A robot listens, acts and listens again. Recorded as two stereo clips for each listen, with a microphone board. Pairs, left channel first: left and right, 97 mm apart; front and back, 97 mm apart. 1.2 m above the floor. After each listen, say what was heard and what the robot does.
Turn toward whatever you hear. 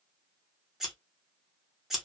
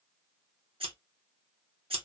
The scissors: 175° right. Turn 175° right.
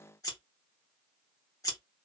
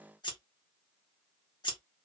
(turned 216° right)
The scissors is now 40° left. Turn 40° left.
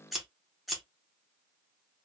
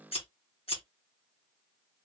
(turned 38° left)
Facing the scissors.